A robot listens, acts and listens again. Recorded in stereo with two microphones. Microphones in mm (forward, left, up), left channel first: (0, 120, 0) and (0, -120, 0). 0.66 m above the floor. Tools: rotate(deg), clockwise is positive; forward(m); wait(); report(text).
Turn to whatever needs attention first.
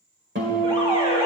rotate(20)
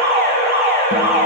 rotate(135)
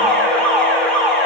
report("Facing the alarm, 1 to 2 m away.")